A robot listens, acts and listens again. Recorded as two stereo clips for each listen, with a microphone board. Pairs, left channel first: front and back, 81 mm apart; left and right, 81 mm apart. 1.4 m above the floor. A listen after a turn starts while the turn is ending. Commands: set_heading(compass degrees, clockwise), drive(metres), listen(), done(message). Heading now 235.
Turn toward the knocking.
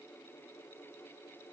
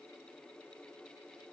listen()
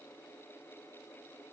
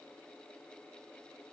listen()
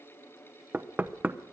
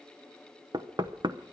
set_heading(345)
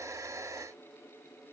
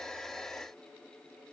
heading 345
listen()
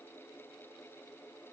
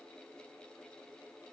listen()
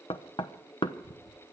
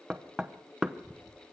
set_heading(355)
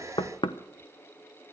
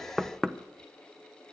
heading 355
done("Facing the knocking.")